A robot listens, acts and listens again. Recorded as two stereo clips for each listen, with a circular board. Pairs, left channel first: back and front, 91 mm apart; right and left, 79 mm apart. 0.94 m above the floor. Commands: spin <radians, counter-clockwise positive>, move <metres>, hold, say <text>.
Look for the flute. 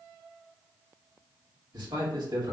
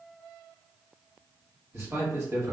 hold
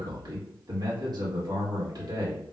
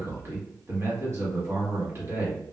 hold
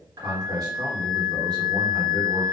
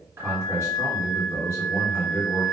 spin 2.01
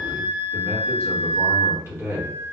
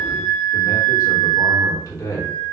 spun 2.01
spin 0.44
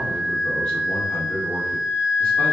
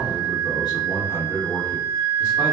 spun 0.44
spin -0.35
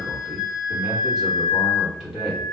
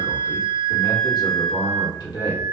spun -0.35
say Facing the flute.